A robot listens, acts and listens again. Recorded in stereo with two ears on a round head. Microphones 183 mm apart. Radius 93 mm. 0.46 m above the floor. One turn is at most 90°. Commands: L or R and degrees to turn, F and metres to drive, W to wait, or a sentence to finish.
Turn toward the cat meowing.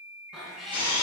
L30
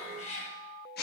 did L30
L90
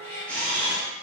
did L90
L10
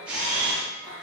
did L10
R10
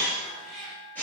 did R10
Found it: a cat meowing, straight ahead, over 4 m away.